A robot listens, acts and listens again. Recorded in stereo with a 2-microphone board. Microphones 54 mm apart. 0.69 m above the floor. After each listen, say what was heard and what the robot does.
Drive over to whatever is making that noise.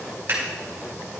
The scissors: about 50° right or 130° right. Turn 50° right.
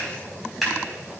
Drive 1.0 m forward.
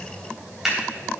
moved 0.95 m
Drive 1.0 m forward.
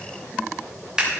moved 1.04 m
The scissors is now 15° right. Turn 15° right.
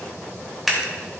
Drive 1.0 m forward.
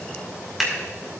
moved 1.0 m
Drive 1.0 m forward.
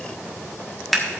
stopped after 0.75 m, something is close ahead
I am next to the scissors.